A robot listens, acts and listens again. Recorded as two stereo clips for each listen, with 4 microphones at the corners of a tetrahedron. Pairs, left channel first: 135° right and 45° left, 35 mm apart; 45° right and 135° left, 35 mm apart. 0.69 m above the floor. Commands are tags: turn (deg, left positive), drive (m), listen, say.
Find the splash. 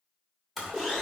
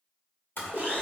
<turn deg="-45"/>
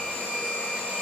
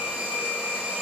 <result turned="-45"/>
<say>Facing where the splash came from. I can't hear it now.</say>